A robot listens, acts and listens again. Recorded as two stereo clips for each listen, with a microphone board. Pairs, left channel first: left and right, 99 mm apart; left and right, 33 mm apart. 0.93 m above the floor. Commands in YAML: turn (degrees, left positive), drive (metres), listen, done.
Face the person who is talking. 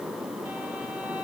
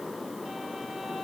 listen: true
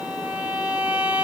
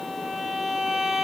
listen: true
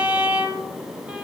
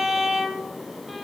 done: "I can't make out anyone speaking to turn to."